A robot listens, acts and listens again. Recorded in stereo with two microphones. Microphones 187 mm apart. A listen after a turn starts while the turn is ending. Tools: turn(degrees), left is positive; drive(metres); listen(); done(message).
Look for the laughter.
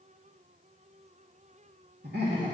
turn(degrees=-60)
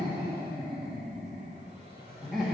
done("Facing the laughter.")